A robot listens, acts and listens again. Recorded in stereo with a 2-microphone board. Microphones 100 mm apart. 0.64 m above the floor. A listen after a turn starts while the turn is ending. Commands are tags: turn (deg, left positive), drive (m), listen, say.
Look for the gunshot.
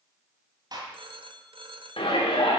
<turn deg="-45"/>
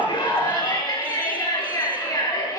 <listen/>
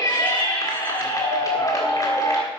<say>I heard a gunshot, but can't make it out now. It was about straight ahead or 90° right.</say>